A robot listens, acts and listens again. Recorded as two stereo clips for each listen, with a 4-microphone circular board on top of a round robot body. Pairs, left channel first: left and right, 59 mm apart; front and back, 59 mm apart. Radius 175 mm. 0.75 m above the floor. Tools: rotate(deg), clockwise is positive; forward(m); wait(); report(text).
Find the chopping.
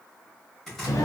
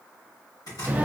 report("Facing the chopping.")